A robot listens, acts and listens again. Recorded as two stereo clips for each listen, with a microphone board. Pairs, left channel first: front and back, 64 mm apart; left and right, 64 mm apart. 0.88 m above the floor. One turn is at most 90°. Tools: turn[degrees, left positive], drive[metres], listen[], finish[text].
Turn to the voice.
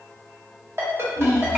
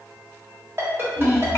Thought: The child speaking: 120° left.
Action: turn[90]
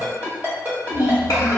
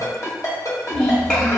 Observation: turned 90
Thought: The child speaking is now 20° left.
Action: turn[20]
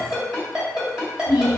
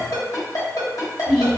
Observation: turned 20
Action: finish[Found it: a child speaking, straight ahead, 1 to 2 m away.]